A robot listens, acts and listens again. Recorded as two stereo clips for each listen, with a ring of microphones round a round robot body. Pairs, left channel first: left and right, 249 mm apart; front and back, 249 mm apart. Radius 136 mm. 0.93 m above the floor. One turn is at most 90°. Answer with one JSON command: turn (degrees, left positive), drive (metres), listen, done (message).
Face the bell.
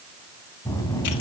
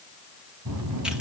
{"turn": 90}
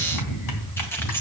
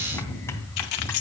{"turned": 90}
{"turn": 80}
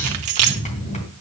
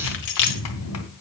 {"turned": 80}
{"turn": 25}
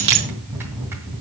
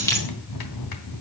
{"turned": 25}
{"turn": -10}
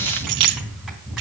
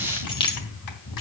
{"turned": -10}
{"done": "Found it: a bell, straight ahead, 2 to 4 m away."}